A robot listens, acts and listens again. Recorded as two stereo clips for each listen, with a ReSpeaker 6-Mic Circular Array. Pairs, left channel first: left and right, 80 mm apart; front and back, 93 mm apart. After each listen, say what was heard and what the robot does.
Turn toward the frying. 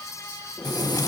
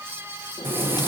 The frying: 115° left. Turn 115° left.
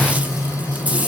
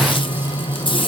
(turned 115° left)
The frying is now 15° right. Turn 15° right.
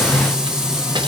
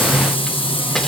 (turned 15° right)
Found it: frying, straight ahead.